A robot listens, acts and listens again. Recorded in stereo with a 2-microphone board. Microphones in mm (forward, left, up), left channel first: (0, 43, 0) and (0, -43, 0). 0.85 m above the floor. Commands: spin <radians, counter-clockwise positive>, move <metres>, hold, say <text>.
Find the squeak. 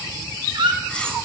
spin -1.22
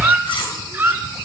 spin -0.44
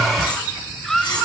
say Facing the squeak.